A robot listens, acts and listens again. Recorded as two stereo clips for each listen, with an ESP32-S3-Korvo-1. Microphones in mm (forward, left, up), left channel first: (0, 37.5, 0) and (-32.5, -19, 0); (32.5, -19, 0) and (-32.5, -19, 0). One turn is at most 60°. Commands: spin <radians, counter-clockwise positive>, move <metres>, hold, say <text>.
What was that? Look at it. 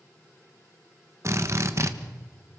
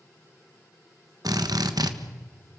spin -1.05
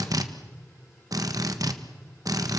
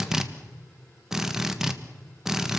spin -1.05
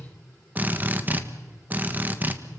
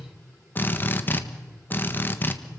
spin -0.96
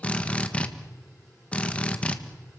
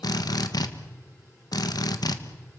spin -0.17
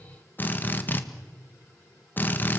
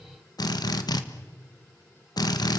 say Found it: a drill, straight ahead, 1 to 2 m away.